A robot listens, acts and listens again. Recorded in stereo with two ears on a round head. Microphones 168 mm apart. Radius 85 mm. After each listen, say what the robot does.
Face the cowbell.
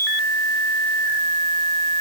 Keep listening.
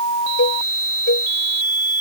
Turn 65° left.
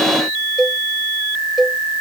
Facing the cowbell.